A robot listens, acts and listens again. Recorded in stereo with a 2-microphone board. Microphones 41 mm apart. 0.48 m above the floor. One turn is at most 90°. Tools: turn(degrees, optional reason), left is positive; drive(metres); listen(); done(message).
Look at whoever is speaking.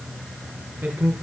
turn(degrees=-55, reason="The man speaking: about 55° right or 125° right.")
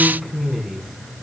done("Found it: a man speaking, straight ahead.")